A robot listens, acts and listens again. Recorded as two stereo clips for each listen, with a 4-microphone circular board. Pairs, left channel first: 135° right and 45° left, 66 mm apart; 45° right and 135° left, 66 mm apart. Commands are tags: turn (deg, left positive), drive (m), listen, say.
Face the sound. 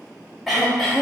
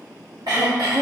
<turn deg="135"/>
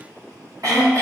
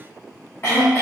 <turn deg="10"/>
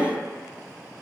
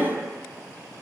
<say>Facing the throat clearing, 1 to 2 m away.</say>